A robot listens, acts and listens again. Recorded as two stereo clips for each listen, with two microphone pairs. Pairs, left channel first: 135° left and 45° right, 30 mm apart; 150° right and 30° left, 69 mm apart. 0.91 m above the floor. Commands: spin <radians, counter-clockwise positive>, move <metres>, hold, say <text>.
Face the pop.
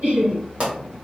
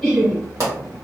say Facing the pop.